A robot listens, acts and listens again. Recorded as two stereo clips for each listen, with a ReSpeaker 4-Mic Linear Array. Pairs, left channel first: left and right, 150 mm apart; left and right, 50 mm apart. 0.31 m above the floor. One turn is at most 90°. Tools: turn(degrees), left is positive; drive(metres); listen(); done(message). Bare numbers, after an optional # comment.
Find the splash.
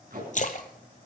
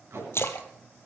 # The splash: about 60° left or 120° left.
turn(60)
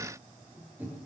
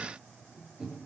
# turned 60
listen()
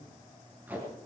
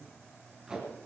done("I heard a splash, but can't make it out now. It was about straight ahead or 60° left.")